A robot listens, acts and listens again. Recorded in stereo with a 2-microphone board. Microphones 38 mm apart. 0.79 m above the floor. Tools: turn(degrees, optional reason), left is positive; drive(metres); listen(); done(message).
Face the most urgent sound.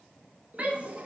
turn(degrees=-35, reason="The shout: about 35° right or 145° right.")
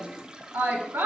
turn(degrees=-110, reason="So it is at 110° right.")
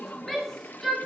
turn(degrees=10, reason="The shout is now 10° left.")
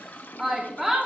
done("Facing the shout, 1 to 2 m away.")